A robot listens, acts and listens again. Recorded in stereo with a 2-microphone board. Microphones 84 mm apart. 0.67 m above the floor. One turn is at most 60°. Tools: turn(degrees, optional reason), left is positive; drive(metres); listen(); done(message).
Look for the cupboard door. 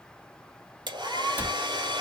turn(degrees=-15, reason="The cupboard door: about 15° right or 165° right.")
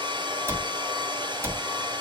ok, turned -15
turn(degrees=-60, reason="So it is at 150° right.")
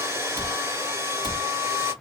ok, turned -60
turn(degrees=-60, reason="The cupboard door is now 95° right.")
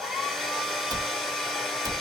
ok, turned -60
turn(degrees=-55, reason="The cupboard door is now 55° right.")
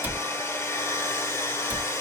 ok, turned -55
turn(degrees=-25, reason="The cupboard door is now 25° right.")
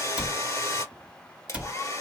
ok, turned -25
turn(degrees=-15, reason="The cupboard door is now 15° right.")
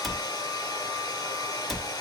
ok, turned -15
done("Found it: a cupboard door, straight ahead.")